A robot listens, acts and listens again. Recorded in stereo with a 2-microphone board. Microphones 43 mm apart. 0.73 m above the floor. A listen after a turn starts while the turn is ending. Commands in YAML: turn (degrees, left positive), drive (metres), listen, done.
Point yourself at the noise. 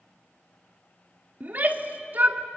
turn: -40
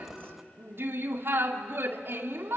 turn: -90
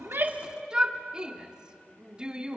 turn: -20
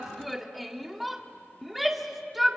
done: "Found it: a shout, straight ahead, 2 to 4 m away."